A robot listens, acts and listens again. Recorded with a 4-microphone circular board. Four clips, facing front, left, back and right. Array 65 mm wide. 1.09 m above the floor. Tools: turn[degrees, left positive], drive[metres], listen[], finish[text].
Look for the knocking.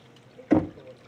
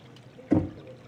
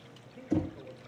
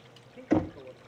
Thought: The knocking: 25° right.
Action: turn[-25]
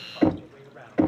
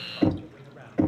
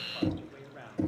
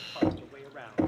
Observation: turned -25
Thought: The knocking is now 10° right.
Action: turn[-10]
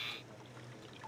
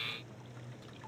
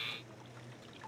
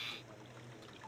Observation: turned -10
Action: listen[]
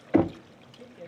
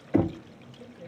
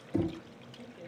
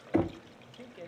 Action: finish[Found it: knocking, straight ahead, under 1 m away.]